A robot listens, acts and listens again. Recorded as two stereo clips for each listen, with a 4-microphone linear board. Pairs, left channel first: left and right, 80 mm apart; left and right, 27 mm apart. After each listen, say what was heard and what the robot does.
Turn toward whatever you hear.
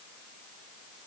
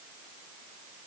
Keep listening.
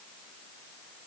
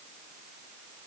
Keep listening.
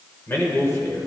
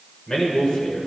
The man speaking: about 40° left or 140° left. Turn 40° left.
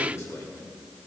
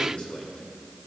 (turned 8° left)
The man speaking: about 45° left or 135° left. Turn 45° left.
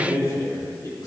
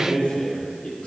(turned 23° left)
The man speaking: about 55° left or 125° left. Turn 55° left.
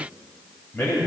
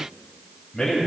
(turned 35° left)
The man speaking: about 35° left or 145° left. Turn 35° left.
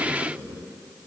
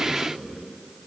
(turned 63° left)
So it is at 25° right. Turn 25° right.
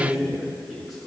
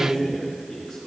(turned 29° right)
Facing the man speaking, 2 to 4 m away.